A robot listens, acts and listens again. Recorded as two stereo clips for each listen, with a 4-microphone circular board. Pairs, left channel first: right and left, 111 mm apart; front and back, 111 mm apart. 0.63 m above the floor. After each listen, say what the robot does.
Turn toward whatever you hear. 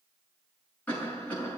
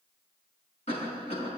Turn 15° right.
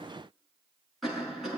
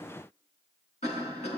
Found it: a cough, straight ahead, over 4 m away.